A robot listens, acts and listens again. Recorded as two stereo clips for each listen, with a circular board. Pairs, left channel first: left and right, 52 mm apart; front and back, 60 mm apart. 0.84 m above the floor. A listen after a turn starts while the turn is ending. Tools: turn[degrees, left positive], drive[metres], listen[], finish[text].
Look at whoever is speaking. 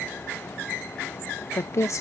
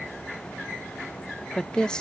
Thought: The woman speaking: 75° left.
Action: turn[75]
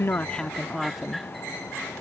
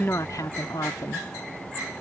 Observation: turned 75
Action: finish[Found it: a woman speaking, straight ahead.]